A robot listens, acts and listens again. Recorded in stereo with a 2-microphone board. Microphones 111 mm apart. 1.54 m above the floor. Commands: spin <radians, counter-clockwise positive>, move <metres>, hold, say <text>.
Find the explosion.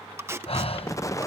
spin 0.52
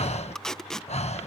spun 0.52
hold
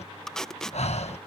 say I heard an explosion, but can't make it out now. It was about straight ahead or 120° left.